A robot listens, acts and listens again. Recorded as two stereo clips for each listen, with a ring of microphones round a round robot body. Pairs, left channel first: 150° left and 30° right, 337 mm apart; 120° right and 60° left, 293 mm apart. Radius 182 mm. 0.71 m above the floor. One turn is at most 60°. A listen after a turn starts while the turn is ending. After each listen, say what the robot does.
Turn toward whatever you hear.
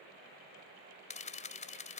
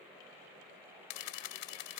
Turn 60° right.
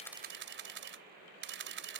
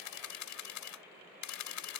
Turn 60° right.
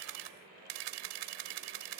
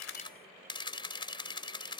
Turn 45° right.
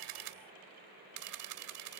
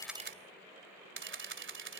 Turn 10° left.
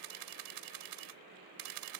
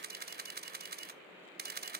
Found it: a camera shutter, straight ahead.